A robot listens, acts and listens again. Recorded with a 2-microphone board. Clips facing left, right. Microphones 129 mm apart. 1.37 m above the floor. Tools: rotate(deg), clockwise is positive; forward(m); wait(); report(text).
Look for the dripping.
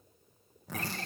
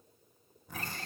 wait()
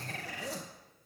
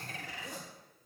wait()
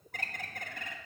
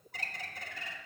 report("I can't make out dripping to turn to.")